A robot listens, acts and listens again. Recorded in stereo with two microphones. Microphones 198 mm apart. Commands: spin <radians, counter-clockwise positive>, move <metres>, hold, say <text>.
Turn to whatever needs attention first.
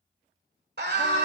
spin -1.05
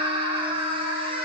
spin -0.61
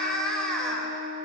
say Facing the scream, 1 to 2 m away.